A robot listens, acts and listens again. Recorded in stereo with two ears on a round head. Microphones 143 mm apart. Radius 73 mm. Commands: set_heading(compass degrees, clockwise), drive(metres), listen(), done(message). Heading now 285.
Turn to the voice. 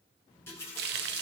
listen()
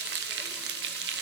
listen()
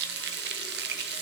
done("I can't make out anyone speaking, only a running tap and frying.")